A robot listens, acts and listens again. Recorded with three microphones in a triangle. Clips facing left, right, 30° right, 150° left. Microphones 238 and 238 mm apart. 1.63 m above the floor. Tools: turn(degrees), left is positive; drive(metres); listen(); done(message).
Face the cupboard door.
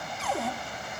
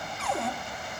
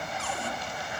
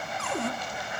turn(degrees=180)
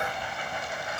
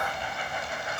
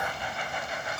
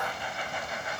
listen()
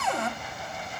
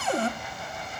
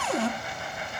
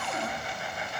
turn(degrees=-30)
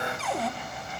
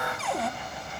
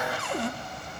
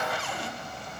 done("Facing the cupboard door, 1 to 2 m away.")